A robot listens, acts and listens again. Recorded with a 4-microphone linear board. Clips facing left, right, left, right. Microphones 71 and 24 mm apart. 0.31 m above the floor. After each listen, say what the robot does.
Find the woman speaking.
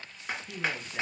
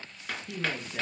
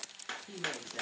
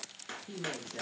Turn 30° left.
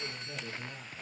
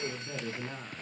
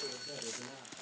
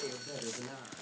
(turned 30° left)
Turn 30° right.
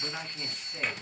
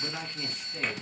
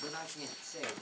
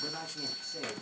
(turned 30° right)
Turn 10° left.
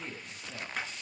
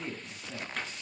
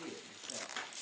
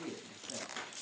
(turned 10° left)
Facing the woman speaking.